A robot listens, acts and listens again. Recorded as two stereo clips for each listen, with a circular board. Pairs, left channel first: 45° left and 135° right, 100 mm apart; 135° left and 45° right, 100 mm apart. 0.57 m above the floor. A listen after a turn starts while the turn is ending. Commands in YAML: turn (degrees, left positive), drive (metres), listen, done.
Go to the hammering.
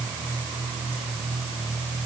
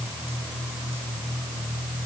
listen: true
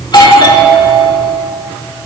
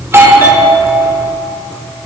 listen: true
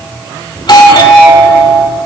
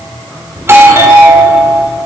done: "I can't make out hammering, only a doorbell."